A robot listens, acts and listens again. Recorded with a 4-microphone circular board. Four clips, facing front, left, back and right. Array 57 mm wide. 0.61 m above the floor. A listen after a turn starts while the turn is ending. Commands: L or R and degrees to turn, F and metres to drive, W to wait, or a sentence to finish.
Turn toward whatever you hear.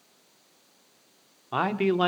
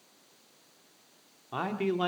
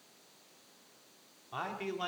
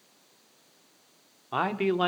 R30
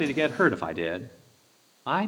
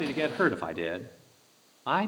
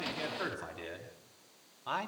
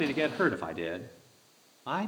L50
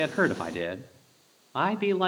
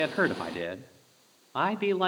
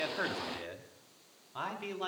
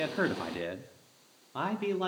L40
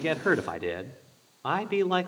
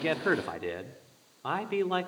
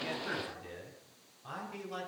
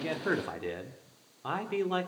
L10
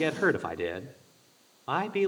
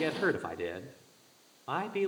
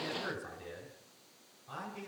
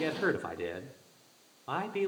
Found it: a man speaking, straight ahead.